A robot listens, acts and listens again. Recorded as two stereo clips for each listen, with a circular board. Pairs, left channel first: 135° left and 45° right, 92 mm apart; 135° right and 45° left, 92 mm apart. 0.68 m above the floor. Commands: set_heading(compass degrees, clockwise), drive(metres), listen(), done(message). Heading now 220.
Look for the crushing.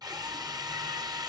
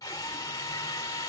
listen()
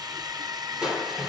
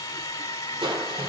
set_heading(180)
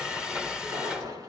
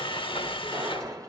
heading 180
done("Found it: crushing, straight ahead.")